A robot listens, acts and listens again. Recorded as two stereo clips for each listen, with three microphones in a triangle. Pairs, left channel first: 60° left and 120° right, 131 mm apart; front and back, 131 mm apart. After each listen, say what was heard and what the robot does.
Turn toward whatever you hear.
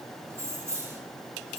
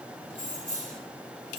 The keys jangling: 170° left. Turn 170° left.
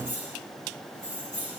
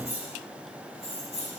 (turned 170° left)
The keys jangling is now 35° left. Turn 35° left.
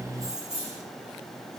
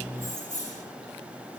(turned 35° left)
The keys jangling is now 20° left. Turn 20° left.
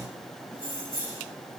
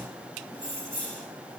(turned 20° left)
Facing the keys jangling.